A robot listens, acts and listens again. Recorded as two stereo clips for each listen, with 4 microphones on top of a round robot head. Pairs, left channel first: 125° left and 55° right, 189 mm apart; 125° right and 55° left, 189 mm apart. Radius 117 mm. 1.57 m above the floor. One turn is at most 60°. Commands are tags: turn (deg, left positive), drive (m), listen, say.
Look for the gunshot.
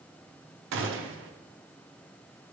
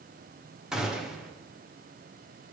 <turn deg="-35"/>
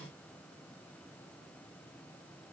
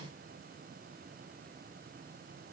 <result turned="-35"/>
<say>I heard a gunshot from this way, but can't make it out now.</say>